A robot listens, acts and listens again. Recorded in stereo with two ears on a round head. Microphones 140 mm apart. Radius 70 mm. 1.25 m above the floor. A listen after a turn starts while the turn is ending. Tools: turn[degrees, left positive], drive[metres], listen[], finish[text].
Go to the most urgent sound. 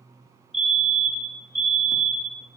Action: turn[30]
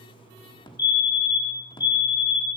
Thought: So it is at 150° left.
Action: turn[150]
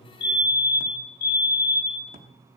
Thought: The fire alarm is now 70° left.
Action: turn[70]
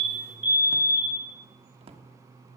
Thought: The fire alarm is now 15° right.
Action: turn[-15]
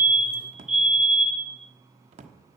Action: drive[1.0]
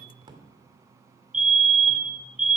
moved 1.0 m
Action: drive[1.0]
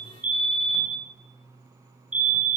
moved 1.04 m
Thought: The fire alarm is now 10° right.
Action: turn[-10]
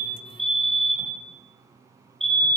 Action: drive[1.0]
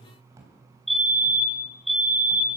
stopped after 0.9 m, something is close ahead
Action: finish[I am next to the fire alarm.]